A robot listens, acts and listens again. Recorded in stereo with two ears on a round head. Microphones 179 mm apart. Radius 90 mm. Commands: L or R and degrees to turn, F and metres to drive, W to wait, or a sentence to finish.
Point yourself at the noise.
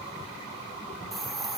L30
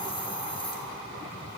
L155
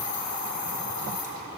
L45
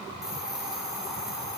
Facing the hiss.